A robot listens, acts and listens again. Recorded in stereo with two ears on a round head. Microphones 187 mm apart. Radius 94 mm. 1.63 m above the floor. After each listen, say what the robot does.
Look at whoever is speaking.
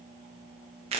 Keep listening.
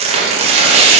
Keep listening.
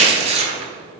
I can't make out anyone speaking to turn to.